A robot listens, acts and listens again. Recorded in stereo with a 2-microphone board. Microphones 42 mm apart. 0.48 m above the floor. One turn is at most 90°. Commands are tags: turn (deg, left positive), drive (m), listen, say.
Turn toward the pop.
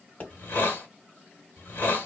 <turn deg="35"/>
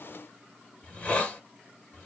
<listen/>
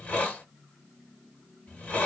<say>I heard a pop, but can't make it out now. It was about straight ahead or 110° left.</say>